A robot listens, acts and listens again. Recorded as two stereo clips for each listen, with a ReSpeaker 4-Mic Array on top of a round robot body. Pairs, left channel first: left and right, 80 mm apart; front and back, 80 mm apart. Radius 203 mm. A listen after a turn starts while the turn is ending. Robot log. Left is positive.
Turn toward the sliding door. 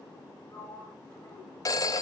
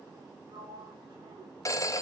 note: The sliding door: 160° left.
cmd yaw +160
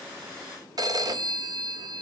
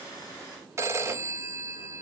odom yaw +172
note: Nothing new. It was at 10° right.
cmd yaw -10
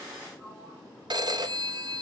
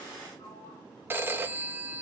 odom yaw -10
end: Facing the sliding door, 1 to 2 m away.